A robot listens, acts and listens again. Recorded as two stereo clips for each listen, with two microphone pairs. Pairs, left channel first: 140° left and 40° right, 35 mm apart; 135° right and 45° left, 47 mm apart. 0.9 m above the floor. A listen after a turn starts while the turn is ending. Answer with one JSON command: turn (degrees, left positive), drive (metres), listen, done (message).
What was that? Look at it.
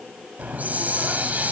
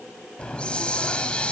{"turn": -70}
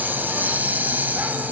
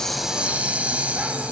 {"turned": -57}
{"turn": -15}
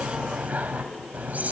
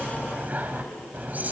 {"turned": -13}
{"done": "Facing the hiss, 1 to 2 m away."}